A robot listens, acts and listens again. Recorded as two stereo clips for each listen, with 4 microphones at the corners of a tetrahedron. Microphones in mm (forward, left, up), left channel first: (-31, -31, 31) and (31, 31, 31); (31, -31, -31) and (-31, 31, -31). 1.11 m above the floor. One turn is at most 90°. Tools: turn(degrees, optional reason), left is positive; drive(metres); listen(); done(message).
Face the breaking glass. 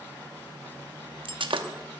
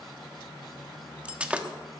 turn(degrees=60, reason="The breaking glass: 60° left.")
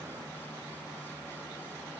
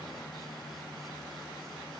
done("Facing where the breaking glass came from. I can't hear it now.")